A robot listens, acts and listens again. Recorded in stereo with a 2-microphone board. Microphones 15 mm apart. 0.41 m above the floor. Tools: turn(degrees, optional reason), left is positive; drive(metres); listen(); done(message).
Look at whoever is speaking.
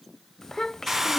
turn(degrees=25, reason="The child speaking: about 25° left or 155° left.")
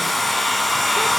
listen()
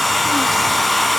listen()
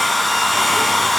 done("I heard a child speaking, but can't make it out now. It was about straight ahead or 130° left.")